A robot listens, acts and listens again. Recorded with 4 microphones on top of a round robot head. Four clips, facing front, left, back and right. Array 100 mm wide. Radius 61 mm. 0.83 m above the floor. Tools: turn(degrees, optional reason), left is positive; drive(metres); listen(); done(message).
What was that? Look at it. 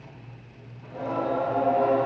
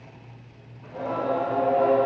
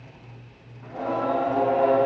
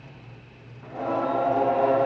turn(degrees=-140, reason="The singing: 140° right.")
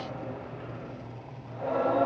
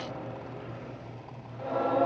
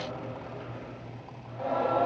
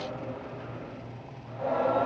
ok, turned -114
turn(degrees=-40, reason="The singing is now 40° right.")
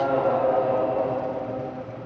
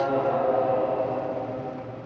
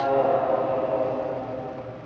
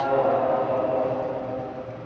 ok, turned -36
done("Found it: singing, straight ahead.")